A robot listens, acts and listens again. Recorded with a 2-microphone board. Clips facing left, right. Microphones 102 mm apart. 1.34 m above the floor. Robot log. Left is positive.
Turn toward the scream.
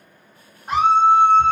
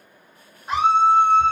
note: The scream: about 50° left or 130° left.
cmd yaw +50
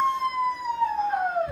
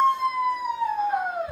end: Facing the scream, 1 to 2 m away.